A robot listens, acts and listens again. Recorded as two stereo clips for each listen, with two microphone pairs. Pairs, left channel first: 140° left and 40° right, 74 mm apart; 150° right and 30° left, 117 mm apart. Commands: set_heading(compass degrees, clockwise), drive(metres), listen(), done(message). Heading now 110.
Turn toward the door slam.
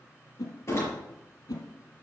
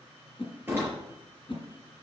set_heading(10)
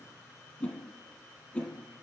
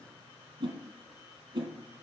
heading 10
done("Facing where the door slam came from. I can't hear it now.")